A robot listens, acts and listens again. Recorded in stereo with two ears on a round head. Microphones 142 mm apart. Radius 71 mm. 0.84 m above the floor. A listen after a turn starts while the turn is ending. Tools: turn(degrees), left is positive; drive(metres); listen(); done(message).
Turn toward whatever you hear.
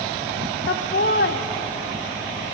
turn(degrees=75)
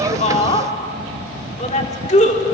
turn(degrees=50)
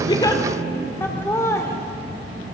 turn(degrees=20)
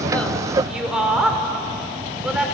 done("Found it: laughter, straight ahead, 2 to 4 m away.")